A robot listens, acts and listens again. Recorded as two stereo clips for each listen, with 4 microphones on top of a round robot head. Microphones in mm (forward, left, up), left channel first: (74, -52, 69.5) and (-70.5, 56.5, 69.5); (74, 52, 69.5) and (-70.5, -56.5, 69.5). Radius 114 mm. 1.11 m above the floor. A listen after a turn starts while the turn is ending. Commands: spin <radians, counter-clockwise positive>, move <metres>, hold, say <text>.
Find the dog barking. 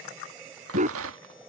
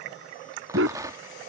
spin -2.88
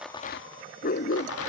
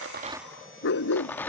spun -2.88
spin 0.17
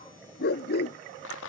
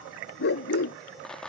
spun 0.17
say Found it: a dog barking, straight ahead.